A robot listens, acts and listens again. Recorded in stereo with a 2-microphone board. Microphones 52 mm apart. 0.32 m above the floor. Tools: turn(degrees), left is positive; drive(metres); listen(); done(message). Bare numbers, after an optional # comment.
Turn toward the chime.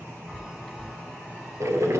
turn(-30)
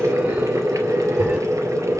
listen()
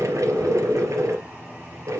listen()
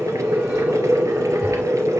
done("I heard a chime, but can't make it out now. It was about 25° left or 145° right.")